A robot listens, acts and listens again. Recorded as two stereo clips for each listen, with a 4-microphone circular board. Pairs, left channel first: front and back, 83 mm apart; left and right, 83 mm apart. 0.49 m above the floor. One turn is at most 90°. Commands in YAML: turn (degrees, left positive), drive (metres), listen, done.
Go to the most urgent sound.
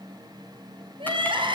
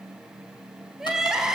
turn: -90
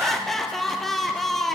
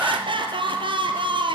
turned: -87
turn: -85
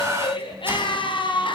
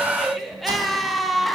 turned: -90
drive: 1.0
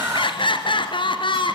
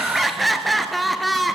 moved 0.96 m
drive: 1.0
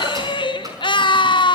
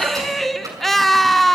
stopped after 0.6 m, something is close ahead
done: "Arrived at the crying, straight ahead."